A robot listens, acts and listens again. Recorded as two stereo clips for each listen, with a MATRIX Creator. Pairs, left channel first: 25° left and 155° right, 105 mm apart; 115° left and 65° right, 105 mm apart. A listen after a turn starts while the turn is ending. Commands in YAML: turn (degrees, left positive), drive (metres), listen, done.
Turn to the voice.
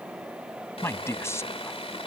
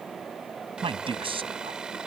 turn: -40
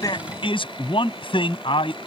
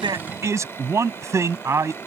done: "Facing the man speaking."